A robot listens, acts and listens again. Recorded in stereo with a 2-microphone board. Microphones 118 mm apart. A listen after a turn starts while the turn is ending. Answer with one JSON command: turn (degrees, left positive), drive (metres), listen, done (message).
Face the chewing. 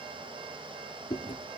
{"turn": 50}
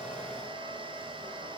{"listen": true}
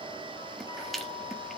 {"done": "Facing the chewing, 1 to 2 m away."}